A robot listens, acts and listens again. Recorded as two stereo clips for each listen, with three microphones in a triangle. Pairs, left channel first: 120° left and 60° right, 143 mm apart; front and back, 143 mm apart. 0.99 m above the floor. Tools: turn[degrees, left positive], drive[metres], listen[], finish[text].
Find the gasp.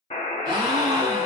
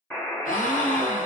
Action: finish[Facing the gasp, 1 to 2 m away.]